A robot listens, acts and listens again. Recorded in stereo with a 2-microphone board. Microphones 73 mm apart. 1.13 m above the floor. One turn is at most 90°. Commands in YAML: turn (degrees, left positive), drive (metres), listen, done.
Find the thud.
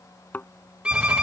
turn: 25
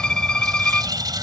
listen: true
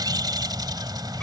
done: "I heard a thud, but can't make it out now. It was about straight ahead or 130° left."